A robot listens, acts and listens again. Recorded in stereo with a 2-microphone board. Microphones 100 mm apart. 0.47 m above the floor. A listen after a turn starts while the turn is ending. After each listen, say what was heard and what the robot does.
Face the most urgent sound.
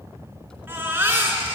The baby crying: about 20° right or 160° right. Turn 20° right.
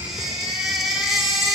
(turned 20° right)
Found it: a baby crying, straight ahead, 2 to 4 m away.